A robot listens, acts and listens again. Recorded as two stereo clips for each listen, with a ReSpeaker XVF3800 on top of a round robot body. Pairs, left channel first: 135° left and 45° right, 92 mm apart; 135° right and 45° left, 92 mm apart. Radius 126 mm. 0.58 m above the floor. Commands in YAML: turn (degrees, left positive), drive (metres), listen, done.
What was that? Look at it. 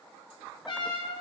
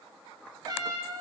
turn: 95
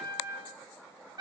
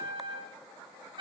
done: "Facing the trumpet, 2 to 4 m away."